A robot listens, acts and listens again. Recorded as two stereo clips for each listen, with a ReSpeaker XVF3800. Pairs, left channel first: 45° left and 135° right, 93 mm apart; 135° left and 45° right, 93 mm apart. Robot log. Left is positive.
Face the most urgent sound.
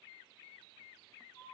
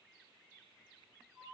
cmd idle
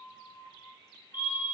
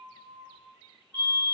note: The fire alarm: 70° right.
cmd yaw -70
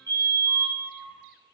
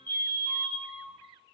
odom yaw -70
note: The fire alarm is now 10° right.
cmd yaw -10
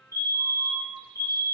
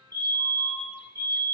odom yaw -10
end: Facing the fire alarm.